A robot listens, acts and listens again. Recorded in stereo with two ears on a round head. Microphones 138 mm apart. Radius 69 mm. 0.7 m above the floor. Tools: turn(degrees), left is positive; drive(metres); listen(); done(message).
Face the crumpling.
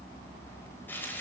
listen()
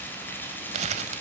turn(degrees=-45)
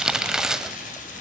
done("Facing the crumpling.")